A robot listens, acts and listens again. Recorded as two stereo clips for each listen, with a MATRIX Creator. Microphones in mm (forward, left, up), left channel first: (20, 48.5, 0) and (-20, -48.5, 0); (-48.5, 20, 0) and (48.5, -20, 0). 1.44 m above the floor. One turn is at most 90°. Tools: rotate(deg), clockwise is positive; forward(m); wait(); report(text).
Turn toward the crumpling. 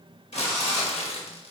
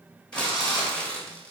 rotate(-80)
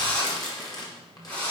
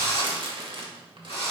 rotate(-15)
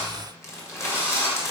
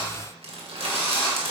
report("Facing the crumpling, 1 to 2 m away.")